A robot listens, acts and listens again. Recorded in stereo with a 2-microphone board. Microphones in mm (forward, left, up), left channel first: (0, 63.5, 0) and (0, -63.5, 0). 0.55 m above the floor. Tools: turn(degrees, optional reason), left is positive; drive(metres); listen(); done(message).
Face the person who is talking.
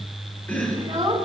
turn(degrees=-30, reason="The child speaking: about 30° right or 150° right.")
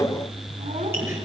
listen()
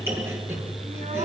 listen()
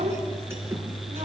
turn(degrees=-120, reason="So it is at 120° right.")
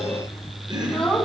turn(degrees=10, reason="The child speaking is now 10° left.")
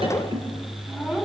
done("Found it: a child speaking, straight ahead, 2 to 4 m away.")